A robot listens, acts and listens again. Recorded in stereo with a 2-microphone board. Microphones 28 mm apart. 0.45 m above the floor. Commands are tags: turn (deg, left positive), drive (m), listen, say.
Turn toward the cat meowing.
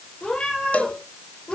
<turn deg="40"/>
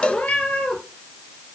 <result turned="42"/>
<turn deg="105"/>
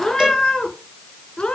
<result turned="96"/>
<turn deg="40"/>
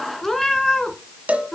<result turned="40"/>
<turn deg="15"/>
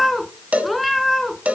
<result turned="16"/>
<say>Facing the cat meowing, 1 to 2 m away.</say>